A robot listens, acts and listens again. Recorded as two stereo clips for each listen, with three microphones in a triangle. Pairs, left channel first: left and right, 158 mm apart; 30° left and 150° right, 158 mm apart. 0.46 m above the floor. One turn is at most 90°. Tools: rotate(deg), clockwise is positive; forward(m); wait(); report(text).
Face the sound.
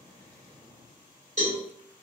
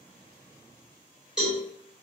rotate(65)
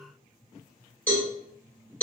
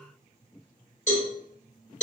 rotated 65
rotate(-15)
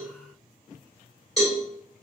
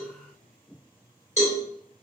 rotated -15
report("Facing the cowbell.")